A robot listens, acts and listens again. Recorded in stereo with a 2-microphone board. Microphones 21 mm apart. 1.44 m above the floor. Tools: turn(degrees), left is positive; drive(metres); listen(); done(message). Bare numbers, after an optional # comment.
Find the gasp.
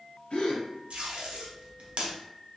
turn(90)
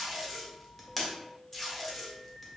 done("I heard a gasp from this way, but can't make it out now.")